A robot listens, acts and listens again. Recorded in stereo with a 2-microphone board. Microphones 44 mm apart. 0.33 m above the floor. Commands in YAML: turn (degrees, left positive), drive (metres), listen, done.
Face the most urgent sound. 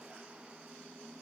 listen: true
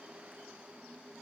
listen: true
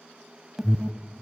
turn: -30
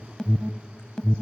turn: 20
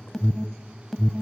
done: "Found it: an alarm, straight ahead."